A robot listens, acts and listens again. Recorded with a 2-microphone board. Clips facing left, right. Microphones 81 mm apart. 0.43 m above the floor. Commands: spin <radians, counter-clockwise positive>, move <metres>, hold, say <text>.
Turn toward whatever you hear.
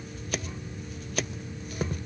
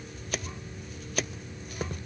hold
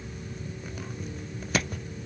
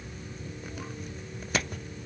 hold
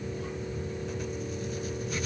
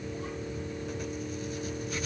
say I can't make out anything to turn to.